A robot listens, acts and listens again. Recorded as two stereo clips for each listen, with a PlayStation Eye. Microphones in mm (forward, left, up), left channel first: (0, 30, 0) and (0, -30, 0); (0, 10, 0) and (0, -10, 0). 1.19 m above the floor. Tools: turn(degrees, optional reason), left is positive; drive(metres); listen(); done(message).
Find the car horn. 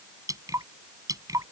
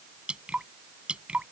listen()
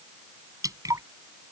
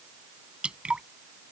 listen()
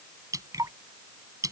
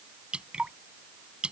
done("I can't make out a car horn, only dripping.")